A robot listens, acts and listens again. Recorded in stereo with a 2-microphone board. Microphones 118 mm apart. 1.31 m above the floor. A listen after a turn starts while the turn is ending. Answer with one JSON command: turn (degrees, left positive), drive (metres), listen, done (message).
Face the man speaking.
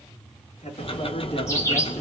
{"turn": 60}
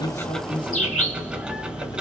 {"listen": true}
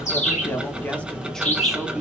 {"turn": -10}
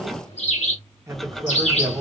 {"turn": -30}
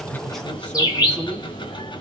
{"listen": true}
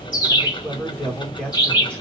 {"turn": 10}
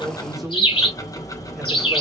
{"done": "Found it: a man speaking, straight ahead."}